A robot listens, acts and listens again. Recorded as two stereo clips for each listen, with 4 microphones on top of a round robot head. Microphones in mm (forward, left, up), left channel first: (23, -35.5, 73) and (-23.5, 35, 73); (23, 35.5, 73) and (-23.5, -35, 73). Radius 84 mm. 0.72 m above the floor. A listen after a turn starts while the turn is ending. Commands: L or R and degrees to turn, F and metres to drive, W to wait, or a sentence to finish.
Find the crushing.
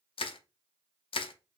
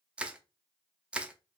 R45
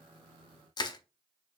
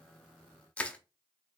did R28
R20
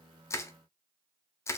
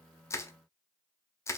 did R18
Found it: crushing, straight ahead.